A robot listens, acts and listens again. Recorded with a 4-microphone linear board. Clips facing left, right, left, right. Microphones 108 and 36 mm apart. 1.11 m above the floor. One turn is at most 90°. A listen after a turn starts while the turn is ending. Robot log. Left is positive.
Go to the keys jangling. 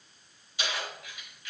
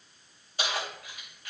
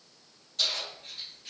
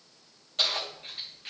note: The keys jangling: about 45° right or 135° right.
cmd yaw -45
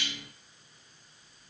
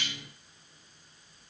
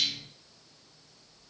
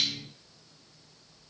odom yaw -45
cmd idle
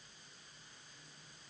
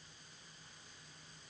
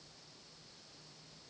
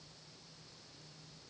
cmd idle
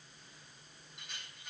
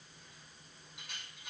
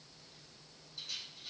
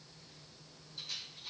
end: I heard keys jangling, but can't make it out now. It was about straight ahead or 90° right. I did not reach it.